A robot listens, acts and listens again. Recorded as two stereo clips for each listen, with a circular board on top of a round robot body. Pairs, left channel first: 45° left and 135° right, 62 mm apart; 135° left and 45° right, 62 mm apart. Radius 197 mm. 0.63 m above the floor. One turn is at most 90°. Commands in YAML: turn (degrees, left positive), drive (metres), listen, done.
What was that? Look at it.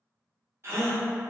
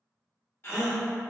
turn: 90
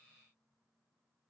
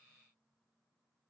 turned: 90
turn: 90
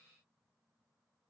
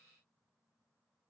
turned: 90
done: "Facing where the gasp came from. I can't hear it now."